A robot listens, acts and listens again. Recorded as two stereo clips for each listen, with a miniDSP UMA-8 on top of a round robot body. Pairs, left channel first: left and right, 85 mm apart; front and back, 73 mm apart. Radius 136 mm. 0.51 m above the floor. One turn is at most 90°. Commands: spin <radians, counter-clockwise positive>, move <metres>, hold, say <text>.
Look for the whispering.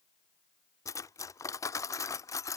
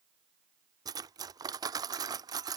hold
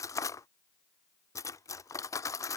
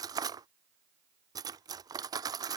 hold
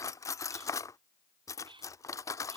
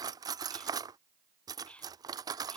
spin -1.31
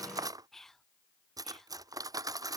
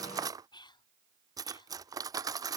say Found it: whispering, straight ahead.